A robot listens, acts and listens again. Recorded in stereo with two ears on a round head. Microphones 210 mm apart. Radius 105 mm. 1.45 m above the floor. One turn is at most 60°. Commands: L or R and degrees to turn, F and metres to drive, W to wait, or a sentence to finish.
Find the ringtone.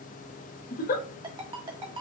R20
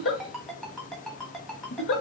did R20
Facing the ringtone, 1 to 2 m away.